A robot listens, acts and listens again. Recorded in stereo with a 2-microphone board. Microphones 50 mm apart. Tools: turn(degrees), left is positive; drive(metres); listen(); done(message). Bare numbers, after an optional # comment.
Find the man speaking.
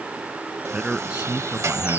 # The man speaking: about 20° right or 160° right.
turn(-20)
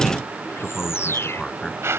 # So it is at 10° left.
turn(10)
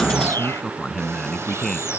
# The man speaking is now 10° left.
turn(10)
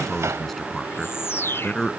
done("Facing the man speaking.")